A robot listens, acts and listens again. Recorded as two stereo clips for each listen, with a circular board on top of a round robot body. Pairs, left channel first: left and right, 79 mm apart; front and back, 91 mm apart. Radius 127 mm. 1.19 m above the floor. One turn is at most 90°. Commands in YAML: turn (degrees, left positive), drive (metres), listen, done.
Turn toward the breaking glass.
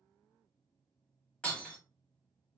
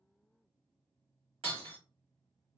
turn: 90
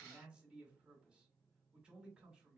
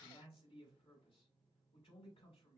turn: 80
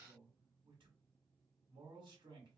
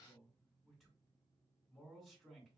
done: "Facing where the breaking glass came from. I can't hear it now."